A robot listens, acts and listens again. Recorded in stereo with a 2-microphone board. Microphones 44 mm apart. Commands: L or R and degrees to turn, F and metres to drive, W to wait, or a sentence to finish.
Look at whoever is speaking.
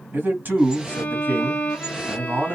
R45
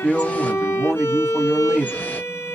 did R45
R10
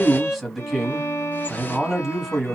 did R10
Facing the man speaking, 1 to 2 m away.